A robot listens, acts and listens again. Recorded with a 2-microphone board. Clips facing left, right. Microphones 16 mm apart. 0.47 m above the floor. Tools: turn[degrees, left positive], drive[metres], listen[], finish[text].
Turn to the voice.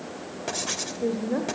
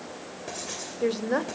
Thought: The woman speaking: about 60° right or 120° right.
Action: turn[-60]
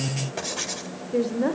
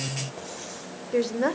Thought: So it is at 40° right.
Action: turn[-40]
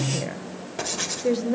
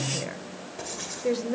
Action: finish[Facing the woman speaking.]